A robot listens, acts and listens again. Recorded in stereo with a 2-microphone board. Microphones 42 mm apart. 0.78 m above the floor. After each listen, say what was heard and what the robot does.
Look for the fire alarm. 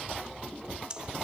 Keep listening.
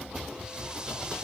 Keep listening.
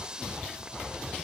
I can't make out a fire alarm, only breathing.